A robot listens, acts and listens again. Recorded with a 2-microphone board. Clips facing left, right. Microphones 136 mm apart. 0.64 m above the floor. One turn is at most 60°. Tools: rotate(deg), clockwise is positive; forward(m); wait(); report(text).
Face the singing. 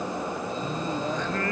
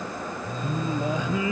rotate(30)
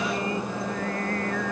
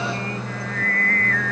rotate(-15)
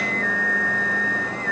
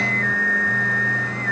report("Found it: singing, straight ahead.")